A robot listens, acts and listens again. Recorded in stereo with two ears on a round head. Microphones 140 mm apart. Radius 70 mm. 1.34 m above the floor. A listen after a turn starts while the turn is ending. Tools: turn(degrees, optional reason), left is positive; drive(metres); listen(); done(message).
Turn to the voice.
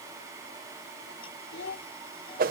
turn(degrees=90)
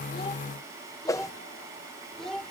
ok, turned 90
done("Found it: a child speaking, straight ahead.")